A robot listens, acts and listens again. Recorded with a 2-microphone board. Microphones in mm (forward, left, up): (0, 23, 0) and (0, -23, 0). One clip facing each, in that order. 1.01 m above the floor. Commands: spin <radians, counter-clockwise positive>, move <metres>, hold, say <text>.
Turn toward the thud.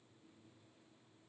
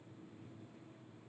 hold
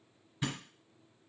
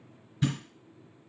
spin 0.52
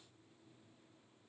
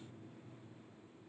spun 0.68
hold
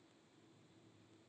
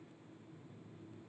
say I heard a thud, but can't make it out now. It was about 30° right or 130° left.